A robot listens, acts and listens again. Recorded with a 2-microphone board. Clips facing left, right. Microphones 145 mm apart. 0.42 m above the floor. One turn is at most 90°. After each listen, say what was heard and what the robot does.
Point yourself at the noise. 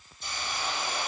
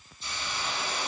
The hiss: about 45° left or 135° left. Turn 45° left.
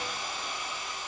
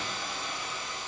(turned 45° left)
Found it: a hiss, straight ahead.